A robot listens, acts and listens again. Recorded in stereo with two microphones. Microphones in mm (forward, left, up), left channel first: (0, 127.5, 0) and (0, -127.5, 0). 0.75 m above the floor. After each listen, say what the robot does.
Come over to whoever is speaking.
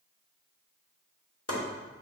Keep listening.
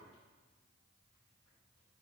Keep listening.
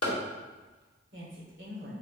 Turn 50° right.
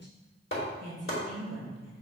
Turn 80° right.
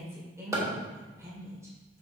Turn 10° right.
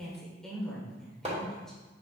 Drive 1.0 m forward.
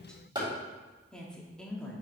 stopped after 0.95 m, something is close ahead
I am next to the woman speaking.